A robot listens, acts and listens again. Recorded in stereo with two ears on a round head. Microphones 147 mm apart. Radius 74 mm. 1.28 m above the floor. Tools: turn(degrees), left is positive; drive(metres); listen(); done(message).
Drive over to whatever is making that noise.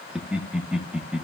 turn(degrees=-30)
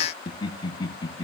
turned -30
turn(degrees=25)
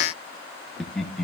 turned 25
drive(metres=1.0)
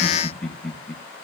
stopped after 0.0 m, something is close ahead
done("Blocked. The laughter is further on, straight ahead.")